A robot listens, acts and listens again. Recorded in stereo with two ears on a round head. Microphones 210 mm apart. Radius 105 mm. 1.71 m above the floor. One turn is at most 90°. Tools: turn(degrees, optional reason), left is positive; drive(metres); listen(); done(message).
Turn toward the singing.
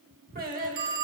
turn(degrees=-40, reason="The singing: about 40° right or 140° right.")
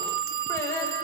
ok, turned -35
turn(degrees=15, reason="So it is at 15° left.")
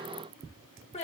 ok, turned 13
turn(degrees=30, reason="The singing is now 30° left.")
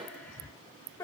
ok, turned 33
turn(degrees=15, reason="The singing is now 15° left.")
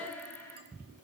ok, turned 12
turn(degrees=10, reason="The singing is now 10° left.")
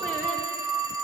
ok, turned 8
listen()
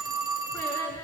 turn(degrees=10, reason="The singing is now 10° left.")
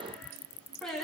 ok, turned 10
done("Found it: singing, straight ahead, 2 to 4 m away.")